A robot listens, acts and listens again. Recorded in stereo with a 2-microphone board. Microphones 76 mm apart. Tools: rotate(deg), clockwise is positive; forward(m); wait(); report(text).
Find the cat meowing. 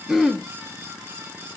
wait()
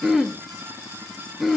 wait()
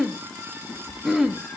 rotate(-20)
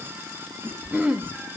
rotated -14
rotate(-30)
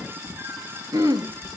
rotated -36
rotate(40)
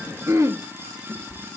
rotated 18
rotate(25)
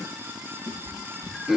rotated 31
report("Found it: a cat meowing, straight ahead, 2 to 4 m away.")